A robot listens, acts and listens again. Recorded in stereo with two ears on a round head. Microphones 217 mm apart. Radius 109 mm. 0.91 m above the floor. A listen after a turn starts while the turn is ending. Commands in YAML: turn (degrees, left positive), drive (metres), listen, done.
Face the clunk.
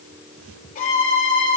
listen: true
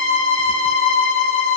listen: true
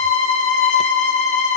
done: "I can't make out a clunk to turn to."